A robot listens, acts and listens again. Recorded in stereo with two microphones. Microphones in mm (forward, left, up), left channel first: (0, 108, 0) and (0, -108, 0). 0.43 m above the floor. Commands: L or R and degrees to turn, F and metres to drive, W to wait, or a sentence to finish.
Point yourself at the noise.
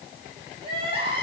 R25
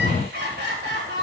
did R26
R125
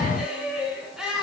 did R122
Found it: crying, straight ahead, over 4 m away.